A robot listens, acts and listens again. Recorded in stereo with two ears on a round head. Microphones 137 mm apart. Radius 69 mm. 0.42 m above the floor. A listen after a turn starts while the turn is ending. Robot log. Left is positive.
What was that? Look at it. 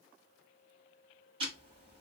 note: The ticking: about 35° right or 145° right.
cmd yaw -35
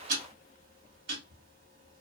note: So it is at 105° right.
cmd yaw -105
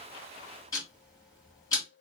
note: The ticking is now 25° left.
cmd yaw +25
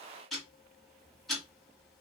end: Found it: ticking, straight ahead.